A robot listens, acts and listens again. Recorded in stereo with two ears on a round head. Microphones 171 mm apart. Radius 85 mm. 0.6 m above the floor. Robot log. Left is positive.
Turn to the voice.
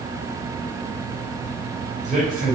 note: The man speaking: about 40° right or 140° right.
cmd yaw -40
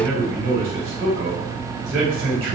note: So it is at 100° right.
cmd yaw -100
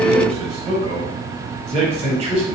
note: The man speaking is now 35° right.
cmd yaw -35
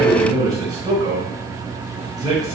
note: The man speaking is now 20° right.
cmd yaw -20
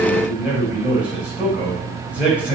note: The man speaking is now 10° right.
cmd yaw -10
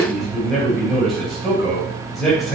end: Facing the man speaking, 2 to 4 m away.